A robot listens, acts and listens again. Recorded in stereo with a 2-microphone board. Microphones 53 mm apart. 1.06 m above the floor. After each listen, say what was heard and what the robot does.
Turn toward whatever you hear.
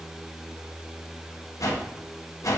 Turn 90° left.
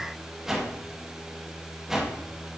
So it is at 10° right. Turn 10° right.
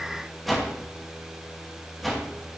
Facing the whoosh, 1 to 2 m away.